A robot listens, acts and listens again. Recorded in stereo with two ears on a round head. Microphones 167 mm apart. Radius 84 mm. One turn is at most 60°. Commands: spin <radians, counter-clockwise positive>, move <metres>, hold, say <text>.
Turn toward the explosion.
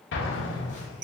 spin 1.05
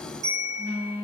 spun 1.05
hold
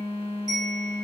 say I heard an explosion, but can't make it out now. It was about 10° left or 50° left.